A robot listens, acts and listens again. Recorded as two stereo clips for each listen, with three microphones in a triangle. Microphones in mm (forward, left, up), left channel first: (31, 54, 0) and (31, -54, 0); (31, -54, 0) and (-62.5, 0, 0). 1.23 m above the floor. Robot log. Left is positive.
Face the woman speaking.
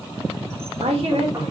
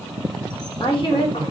note: The woman speaking: 70° right.
cmd yaw -70
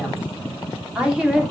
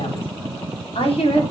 end: Facing the woman speaking, 2 to 4 m away.